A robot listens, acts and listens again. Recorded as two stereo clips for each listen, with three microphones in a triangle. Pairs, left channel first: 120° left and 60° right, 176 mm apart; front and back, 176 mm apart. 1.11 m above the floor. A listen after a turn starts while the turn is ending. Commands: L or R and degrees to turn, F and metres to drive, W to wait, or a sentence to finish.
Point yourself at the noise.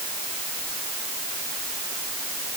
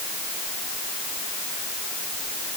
W
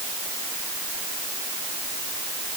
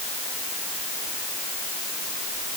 W
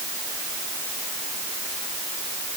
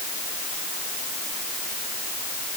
I can't make out anything to turn to.